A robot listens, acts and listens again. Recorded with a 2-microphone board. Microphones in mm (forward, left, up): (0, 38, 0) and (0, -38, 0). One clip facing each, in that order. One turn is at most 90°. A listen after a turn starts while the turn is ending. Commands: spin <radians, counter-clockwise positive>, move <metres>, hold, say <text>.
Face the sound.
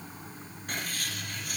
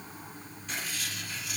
spin 0.79
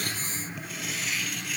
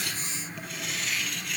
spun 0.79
say Found it: writing, straight ahead.